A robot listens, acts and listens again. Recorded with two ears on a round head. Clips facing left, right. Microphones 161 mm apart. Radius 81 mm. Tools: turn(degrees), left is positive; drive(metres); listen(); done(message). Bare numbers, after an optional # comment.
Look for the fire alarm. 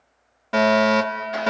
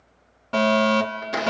turn(30)
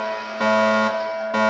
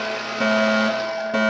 # So it is at 15° right.
turn(-15)
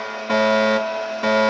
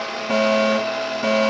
done("Found it: a fire alarm, straight ahead.")